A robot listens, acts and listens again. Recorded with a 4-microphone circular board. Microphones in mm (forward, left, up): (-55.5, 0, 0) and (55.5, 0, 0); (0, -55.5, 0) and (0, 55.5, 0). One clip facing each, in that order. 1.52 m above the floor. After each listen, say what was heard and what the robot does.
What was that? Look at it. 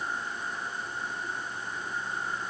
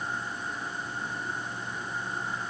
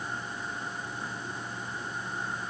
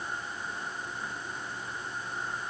Keep listening.
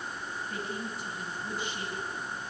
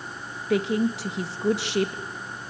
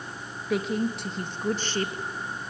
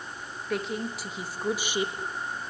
The woman speaking: 15° left. Turn 15° left.
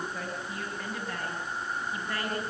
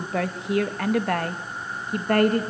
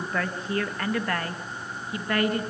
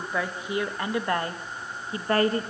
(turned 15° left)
The woman speaking is now 35° left. Turn 35° left.
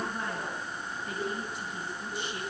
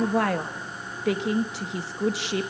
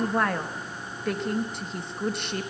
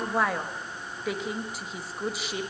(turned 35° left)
Facing the woman speaking.